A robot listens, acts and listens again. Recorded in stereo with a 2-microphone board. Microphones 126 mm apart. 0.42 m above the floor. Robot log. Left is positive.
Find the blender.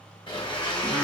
note: The blender: about 40° left or 140° left.
cmd yaw +40
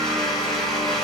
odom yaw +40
end: Facing the blender.